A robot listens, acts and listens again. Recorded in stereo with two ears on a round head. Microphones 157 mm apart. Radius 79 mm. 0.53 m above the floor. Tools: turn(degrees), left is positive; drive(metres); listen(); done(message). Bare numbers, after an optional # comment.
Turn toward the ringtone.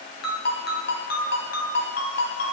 # The ringtone: about 65° left or 115° left.
turn(65)
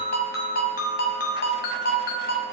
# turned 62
# So it is at 55° left.
turn(55)
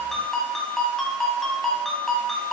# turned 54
done("Found it: a ringtone, straight ahead.")